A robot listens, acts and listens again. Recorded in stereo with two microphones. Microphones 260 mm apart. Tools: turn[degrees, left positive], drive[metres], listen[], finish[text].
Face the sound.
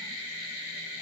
Action: listen[]
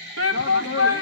Thought: The shout: about 60° left or 120° left.
Action: turn[60]
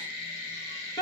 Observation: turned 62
Thought: So it is at 20° left.
Action: turn[20]
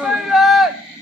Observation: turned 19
Action: finish[Found it: a shout, straight ahead.]